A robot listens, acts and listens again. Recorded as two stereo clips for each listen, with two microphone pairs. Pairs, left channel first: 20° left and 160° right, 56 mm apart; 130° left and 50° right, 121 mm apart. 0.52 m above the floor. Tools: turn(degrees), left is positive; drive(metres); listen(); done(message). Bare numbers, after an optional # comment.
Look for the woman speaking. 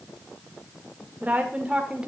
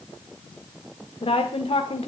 # The woman speaking: 135° left.
turn(135)
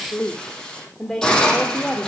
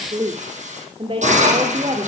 # The woman speaking is now 70° right.
turn(-70)
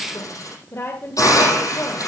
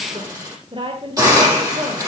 # The woman speaking is now 20° right.
turn(-20)
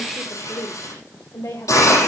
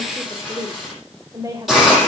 done("Facing the woman speaking.")